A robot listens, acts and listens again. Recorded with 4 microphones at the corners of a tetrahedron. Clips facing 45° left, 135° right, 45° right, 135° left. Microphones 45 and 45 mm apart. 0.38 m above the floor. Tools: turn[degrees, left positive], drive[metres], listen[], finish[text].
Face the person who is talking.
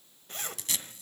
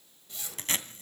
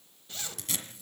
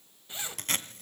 Action: listen[]
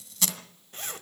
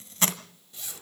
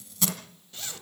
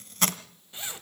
Action: listen[]
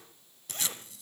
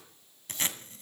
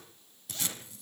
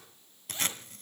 Action: finish[I can't make out anyone speaking, only a zipper and tape being pulled.]